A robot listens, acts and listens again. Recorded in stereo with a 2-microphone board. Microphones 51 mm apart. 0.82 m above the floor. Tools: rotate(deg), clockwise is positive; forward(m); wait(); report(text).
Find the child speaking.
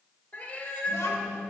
rotate(-90)
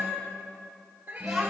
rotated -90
report("Facing the child speaking, 2 to 4 m away.")